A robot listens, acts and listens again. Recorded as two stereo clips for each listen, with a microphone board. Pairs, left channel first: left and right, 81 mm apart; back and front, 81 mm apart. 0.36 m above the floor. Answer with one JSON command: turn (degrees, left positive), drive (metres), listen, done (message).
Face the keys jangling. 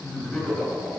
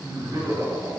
{"listen": true}
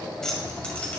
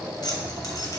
{"turn": 160}
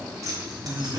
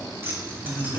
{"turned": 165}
{"turn": -55}
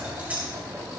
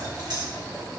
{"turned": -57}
{"turn": -20}
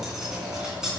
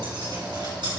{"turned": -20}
{"turn": -10}
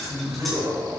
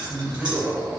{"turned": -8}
{"done": "Facing the keys jangling, 2 to 4 m away."}